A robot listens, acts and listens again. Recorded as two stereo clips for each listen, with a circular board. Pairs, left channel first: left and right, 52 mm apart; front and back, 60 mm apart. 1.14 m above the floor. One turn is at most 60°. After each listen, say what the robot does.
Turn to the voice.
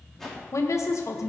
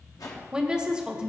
Turn 60° left.
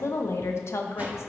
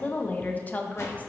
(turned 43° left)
Turn 60° left.
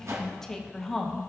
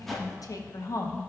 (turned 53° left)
Turn 10° left.
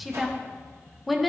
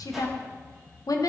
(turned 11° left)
Found it: a woman speaking, straight ahead, under 1 m away.